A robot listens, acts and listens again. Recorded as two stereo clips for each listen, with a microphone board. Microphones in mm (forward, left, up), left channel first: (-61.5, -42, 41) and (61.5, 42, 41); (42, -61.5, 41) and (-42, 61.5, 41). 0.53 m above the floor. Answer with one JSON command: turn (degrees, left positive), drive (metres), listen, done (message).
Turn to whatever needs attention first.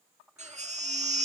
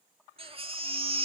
{"turn": 75}
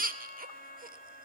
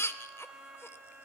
{"turn": 15}
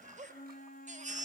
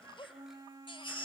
{"done": "Facing the baby crying."}